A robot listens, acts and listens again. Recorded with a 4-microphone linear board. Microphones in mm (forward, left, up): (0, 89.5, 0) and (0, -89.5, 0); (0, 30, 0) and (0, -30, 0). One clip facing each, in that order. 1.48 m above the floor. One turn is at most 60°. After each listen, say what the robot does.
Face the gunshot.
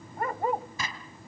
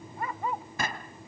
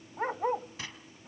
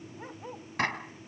Turn 60° right.
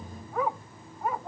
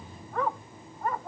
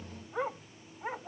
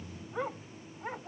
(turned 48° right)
Keep listening.
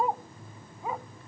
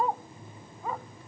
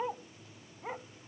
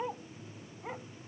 I heard a gunshot, but can't make it out now. It was about 10° right or 70° right.